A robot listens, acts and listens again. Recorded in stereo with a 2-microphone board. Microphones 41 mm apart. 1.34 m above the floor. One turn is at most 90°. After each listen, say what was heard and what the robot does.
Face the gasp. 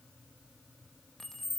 Keep listening.
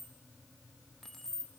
Keep listening.
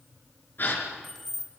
The gasp: about 50° left or 130° left. Turn 50° left.
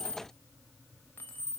Keep listening.
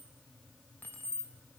I heard a gasp, but can't make it out now. It was about straight ahead or 80° left.